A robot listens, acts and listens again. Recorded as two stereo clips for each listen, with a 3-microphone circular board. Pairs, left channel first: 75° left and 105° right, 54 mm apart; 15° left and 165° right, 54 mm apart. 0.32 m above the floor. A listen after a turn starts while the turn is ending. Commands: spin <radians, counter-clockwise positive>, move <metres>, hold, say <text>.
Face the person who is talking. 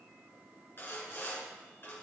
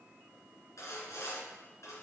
hold
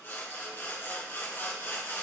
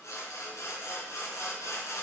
hold
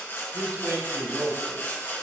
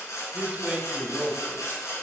spin -1.83
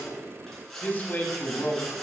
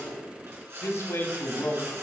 spin 0.44
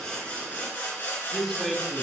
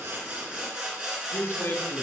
spin -0.17
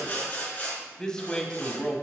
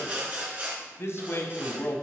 say Facing the man speaking, 1 to 2 m away.